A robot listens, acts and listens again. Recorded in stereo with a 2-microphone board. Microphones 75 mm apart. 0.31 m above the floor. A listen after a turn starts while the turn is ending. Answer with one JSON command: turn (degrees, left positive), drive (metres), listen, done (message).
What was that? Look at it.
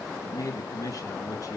{"turn": 50}
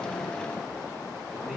{"done": "Found it: a man speaking, straight ahead, 2 to 4 m away."}